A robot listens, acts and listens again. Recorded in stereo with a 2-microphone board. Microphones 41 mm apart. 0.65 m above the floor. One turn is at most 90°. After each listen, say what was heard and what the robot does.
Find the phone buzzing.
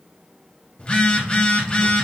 The phone buzzing: about 25° left or 155° left. Turn 25° left.
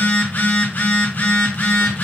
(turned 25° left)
So it is at 125° left. Turn 90° left.
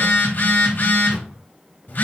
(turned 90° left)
The phone buzzing is now 50° left. Turn 50° left.
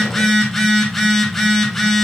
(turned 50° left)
Facing the phone buzzing.